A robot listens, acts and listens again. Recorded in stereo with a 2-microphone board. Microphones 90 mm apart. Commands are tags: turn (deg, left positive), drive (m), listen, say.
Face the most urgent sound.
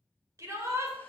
<turn deg="-35"/>
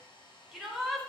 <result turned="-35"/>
<say>Facing the shout, 2 to 4 m away.</say>